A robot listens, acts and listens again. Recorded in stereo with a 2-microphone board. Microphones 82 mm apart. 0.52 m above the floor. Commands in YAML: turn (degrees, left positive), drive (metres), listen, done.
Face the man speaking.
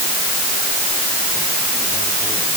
listen: true
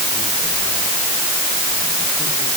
listen: true
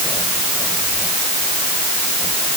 done: "I can't make out a man speaking to turn to."